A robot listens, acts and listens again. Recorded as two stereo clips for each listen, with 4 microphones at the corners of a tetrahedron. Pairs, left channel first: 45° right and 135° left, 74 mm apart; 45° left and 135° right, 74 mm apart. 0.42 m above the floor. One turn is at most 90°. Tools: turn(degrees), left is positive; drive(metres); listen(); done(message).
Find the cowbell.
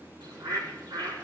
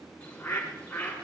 listen()
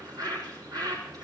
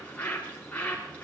listen()
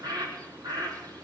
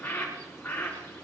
done("I can't make out a cowbell to turn to.")